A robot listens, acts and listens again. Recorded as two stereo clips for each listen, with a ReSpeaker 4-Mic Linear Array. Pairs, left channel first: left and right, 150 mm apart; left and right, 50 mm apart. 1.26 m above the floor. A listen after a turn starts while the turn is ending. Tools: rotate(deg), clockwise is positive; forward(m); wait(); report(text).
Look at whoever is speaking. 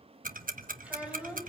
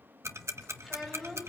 rotate(30)
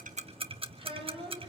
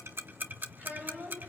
rotate(145)
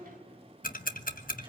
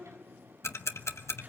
wait()
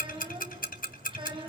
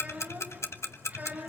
rotate(35)
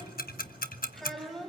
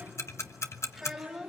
report("Found it: a child speaking, straight ahead.")